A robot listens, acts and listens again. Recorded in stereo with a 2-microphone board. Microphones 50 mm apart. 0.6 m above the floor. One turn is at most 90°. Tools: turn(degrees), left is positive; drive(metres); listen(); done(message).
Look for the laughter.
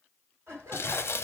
turn(degrees=-60)
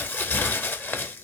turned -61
listen()
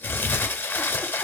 listen()
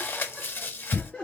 turn(degrees=25)
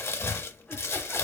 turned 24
listen()
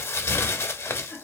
turn(degrees=35)
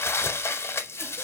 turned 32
listen()
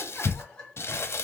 turn(degrees=10)
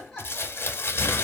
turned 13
done("Found it: laughter, straight ahead.")